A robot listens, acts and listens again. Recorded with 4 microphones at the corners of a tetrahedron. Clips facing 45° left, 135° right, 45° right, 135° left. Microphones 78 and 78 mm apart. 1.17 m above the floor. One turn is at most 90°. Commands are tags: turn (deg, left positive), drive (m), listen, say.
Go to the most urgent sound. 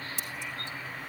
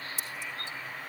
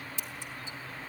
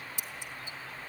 <listen/>
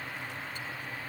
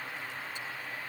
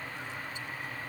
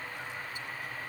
<listen/>
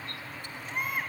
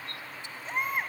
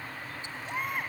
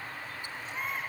<turn deg="-75"/>
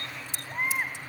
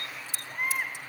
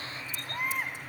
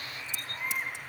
<turn deg="-20"/>
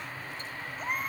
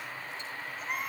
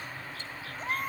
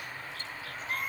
<drive m="1.0"/>
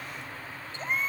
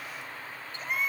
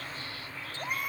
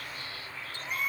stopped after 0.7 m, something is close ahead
<turn deg="-10"/>
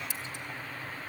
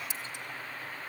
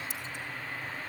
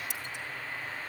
<listen/>
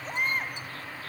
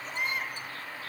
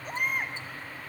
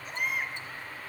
<say>Something is in my way. I am facing the baby crying but have not reached it.</say>